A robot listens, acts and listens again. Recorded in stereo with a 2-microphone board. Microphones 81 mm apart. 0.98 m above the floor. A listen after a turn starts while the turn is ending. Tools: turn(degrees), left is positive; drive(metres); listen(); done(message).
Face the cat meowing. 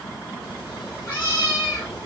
turn(degrees=25)
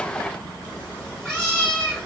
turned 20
turn(degrees=10)
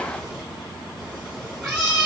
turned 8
done("Found it: a cat meowing, straight ahead, 1 to 2 m away.")